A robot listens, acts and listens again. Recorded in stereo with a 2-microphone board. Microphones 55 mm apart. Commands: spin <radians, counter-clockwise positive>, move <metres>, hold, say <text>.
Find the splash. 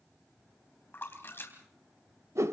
spin 0.79
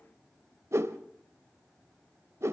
hold
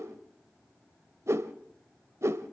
say I heard a splash, but can't make it out now. It was about straight ahead or 90° left.